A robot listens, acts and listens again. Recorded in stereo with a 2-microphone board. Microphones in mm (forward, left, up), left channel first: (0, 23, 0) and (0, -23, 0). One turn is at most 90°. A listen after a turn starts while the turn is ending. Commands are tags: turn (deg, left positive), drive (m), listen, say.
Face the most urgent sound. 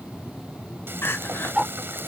<turn deg="55"/>
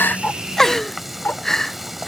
<turn deg="10"/>
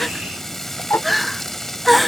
<say>Facing the crying.</say>